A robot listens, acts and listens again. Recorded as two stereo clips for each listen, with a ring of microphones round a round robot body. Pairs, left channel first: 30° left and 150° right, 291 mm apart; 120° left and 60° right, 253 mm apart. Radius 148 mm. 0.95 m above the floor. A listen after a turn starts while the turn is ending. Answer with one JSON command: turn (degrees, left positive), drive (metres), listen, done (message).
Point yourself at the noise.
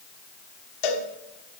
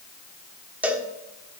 {"turn": 25}
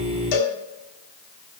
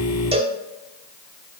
{"turn": 10}
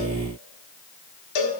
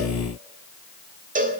{"done": "Facing the cowbell, 1 to 2 m away."}